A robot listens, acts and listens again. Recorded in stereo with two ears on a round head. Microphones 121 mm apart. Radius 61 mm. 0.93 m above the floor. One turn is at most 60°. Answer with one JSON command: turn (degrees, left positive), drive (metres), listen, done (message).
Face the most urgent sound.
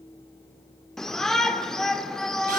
{"turn": 30}
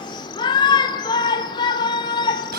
{"turn": 60}
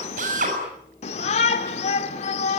{"turn": 60}
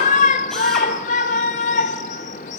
{"turn": 55}
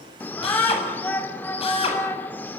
{"turn": 15}
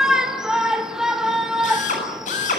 {"done": "Found it: a shout, straight ahead, 2 to 4 m away."}